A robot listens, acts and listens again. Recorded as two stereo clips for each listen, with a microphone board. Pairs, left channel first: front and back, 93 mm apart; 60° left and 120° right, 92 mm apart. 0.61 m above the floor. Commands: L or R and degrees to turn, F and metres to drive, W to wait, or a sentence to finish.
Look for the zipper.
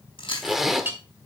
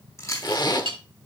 L95
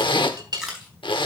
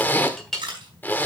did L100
Found it: a zipper, straight ahead, 1 to 2 m away.